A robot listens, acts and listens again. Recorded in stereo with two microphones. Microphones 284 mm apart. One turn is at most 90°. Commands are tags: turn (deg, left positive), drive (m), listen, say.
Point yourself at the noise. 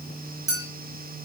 <turn deg="-60"/>
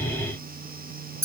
<turn deg="-10"/>
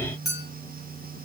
<say>Facing the clink, 1 to 2 m away.</say>